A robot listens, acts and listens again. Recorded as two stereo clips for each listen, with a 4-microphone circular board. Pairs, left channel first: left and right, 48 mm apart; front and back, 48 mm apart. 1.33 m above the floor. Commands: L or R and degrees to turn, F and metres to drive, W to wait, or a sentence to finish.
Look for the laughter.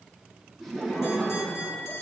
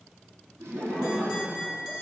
L175
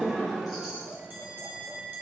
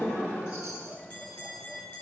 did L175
Facing the laughter.